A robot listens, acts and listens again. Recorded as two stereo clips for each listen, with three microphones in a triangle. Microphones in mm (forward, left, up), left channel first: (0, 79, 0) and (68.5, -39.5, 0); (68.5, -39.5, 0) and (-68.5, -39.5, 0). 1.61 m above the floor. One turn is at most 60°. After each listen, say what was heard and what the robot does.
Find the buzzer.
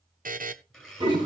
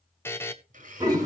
The buzzer: 75° right. Turn 60° right.
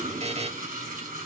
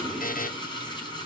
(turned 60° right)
The buzzer is now 15° right. Turn 15° right.
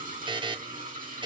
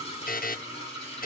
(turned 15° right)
Facing the buzzer.